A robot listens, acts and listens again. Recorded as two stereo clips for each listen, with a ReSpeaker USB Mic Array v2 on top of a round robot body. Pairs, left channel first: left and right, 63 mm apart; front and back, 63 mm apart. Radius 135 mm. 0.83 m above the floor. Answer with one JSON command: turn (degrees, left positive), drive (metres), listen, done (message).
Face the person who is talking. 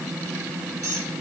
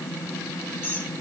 {"listen": true}
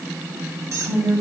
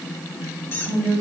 {"turn": -105}
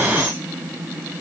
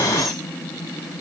{"listen": true}
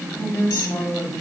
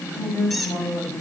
{"turn": 40}
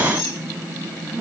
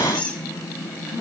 {"turn": 20}
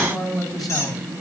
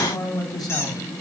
{"done": "Found it: a man speaking, straight ahead, over 4 m away."}